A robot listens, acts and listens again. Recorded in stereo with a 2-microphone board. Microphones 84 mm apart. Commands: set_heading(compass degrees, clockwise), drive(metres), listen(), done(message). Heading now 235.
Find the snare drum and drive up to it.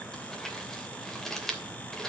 listen()
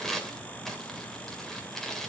listen()
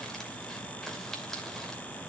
done("I can't make out a snare drum to turn to.")